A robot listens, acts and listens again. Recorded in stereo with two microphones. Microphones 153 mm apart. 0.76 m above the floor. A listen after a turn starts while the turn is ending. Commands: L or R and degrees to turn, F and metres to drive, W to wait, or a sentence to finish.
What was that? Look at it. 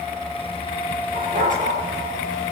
R60
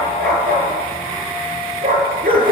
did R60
R75
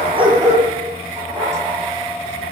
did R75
R20
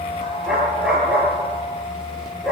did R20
Facing the dog barking, over 4 m away.